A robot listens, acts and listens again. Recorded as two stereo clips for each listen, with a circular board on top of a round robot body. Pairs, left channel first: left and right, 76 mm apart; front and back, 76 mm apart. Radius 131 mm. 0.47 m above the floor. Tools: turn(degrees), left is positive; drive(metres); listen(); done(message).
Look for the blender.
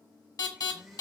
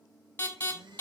turn(degrees=180)
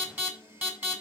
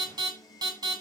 turn(degrees=-35)
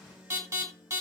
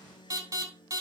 turn(degrees=-15)
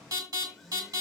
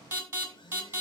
done("Facing the blender.")